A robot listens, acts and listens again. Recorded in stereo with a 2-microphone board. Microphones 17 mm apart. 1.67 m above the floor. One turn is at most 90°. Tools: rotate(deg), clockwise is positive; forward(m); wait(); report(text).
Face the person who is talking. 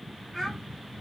rotate(-20)
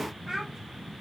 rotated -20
report("Found it: a child speaking, straight ahead.")